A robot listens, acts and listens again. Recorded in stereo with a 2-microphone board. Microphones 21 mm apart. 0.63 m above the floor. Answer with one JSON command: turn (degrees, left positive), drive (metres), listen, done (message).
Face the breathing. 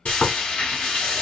{"listen": true}
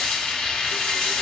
{"listen": true}
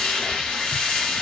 {"done": "I can't make out breathing, only frying."}